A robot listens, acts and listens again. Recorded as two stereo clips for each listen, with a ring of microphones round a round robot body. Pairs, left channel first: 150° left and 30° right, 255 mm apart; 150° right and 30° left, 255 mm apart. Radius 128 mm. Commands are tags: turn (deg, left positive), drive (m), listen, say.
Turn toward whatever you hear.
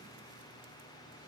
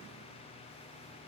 <listen/>
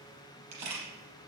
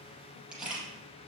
<turn deg="-55"/>
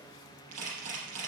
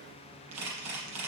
<say>Facing the camera shutter, over 4 m away.</say>